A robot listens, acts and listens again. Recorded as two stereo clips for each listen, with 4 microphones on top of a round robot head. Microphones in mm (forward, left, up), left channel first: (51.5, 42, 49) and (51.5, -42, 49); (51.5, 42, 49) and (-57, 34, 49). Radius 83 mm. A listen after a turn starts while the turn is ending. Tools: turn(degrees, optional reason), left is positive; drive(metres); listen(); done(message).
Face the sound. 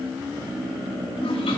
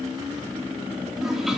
turn(degrees=95, reason="The toilet flushing: 95° left.")
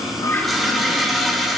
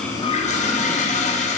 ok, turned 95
done("Found it: a toilet flushing, straight ahead, 2 to 4 m away.")